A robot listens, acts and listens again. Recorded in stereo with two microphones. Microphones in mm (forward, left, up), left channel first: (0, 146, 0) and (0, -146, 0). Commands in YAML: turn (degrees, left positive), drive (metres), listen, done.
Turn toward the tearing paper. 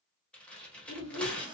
turn: 30
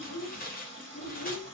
turn: 145
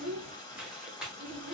done: "Facing the tearing paper."